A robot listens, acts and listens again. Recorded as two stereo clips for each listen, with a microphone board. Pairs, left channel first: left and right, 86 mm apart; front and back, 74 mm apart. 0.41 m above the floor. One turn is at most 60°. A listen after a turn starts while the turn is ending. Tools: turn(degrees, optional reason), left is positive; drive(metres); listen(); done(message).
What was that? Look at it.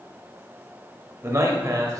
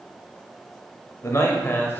turn(degrees=-55, reason="The man speaking: 55° right.")
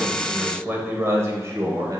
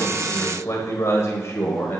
turn(degrees=-55, reason="The man speaking is now 55° right.")
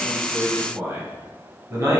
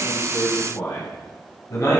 turn(degrees=-40, reason="The man speaking is now 40° right.")
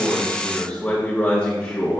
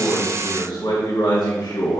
turn(degrees=15, reason="The man speaking is now 15° left.")
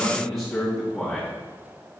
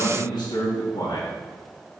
done("Facing the man speaking, 2 to 4 m away.")